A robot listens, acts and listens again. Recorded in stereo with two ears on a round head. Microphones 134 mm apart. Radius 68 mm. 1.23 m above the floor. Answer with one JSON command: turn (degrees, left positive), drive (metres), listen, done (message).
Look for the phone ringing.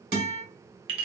{"listen": true}
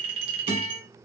{"listen": true}
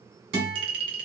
{"done": "I can't make out a phone ringing, only a clink and a guitar."}